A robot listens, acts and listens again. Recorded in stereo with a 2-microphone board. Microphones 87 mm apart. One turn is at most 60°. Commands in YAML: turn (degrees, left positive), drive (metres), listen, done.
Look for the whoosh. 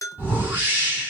turn: -20
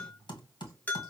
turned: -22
listen: true
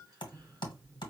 listen: true
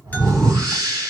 turn: -60
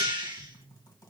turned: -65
turn: -60
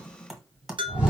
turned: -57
turn: -15
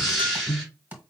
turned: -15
done: "Found it: a whoosh, straight ahead, 2 to 4 m away."